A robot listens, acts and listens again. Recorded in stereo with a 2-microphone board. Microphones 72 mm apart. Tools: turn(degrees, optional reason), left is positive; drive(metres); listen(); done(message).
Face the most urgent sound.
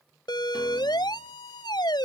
turn(degrees=90)
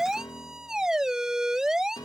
turn(degrees=-10, reason="So it is at 10° right.")
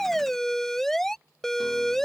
done("Found it: a siren, straight ahead.")